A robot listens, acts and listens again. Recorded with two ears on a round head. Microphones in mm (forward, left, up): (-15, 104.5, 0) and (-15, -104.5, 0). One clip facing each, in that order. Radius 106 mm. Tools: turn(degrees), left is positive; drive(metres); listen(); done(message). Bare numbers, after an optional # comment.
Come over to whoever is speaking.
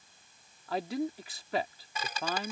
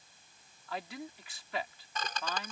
# The man speaking: about 35° left or 145° left.
turn(35)
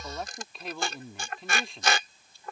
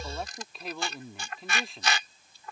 drive(1.0)
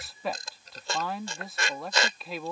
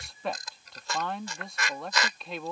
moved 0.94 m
drive(1.0)
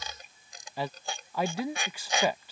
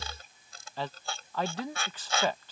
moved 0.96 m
# The man speaking is now 10° left.
turn(10)
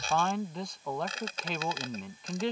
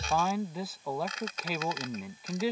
drive(1.0)
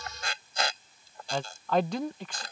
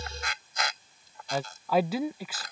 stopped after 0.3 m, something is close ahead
done("I am next to the man speaking.")